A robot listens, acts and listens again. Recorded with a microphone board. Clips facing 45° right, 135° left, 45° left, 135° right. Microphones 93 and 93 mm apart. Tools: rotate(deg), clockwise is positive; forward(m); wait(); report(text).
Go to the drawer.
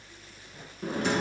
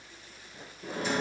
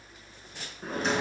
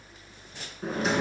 rotate(45)
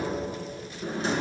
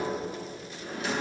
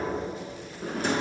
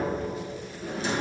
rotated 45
rotate(-10)
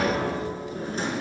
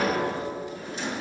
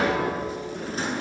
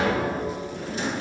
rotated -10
forward(1.0)
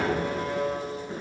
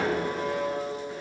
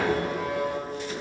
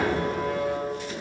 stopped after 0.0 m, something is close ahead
wait()
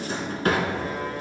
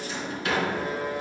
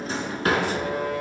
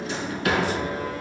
report("Something is in my way. I am facing the drawer but have not reached it.")